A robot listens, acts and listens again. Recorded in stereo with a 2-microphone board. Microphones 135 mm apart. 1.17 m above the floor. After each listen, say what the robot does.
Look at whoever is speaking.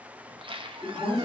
Turn 30° left.
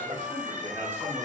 Turn 15° right.
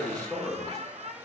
Found it: a man speaking, straight ahead.